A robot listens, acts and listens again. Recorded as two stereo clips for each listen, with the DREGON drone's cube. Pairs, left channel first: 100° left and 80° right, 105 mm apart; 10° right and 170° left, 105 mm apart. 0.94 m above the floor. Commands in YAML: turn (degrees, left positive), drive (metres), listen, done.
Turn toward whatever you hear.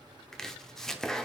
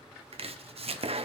turn: -175
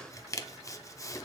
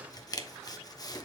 turn: 40
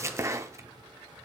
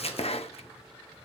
turn: -15
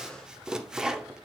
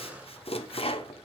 done: "Facing the chopping, under 1 m away."